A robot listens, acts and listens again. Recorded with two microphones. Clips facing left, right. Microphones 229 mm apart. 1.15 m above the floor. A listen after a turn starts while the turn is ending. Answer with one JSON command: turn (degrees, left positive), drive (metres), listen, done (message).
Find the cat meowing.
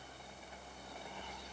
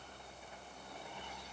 {"listen": true}
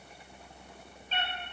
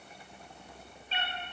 {"turn": 45}
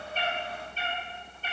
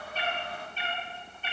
{"turn": 40}
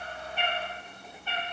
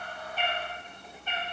{"turn": -20}
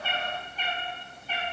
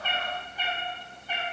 {"turn": -15}
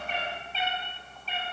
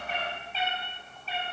{"done": "Found it: a cat meowing, straight ahead, 1 to 2 m away."}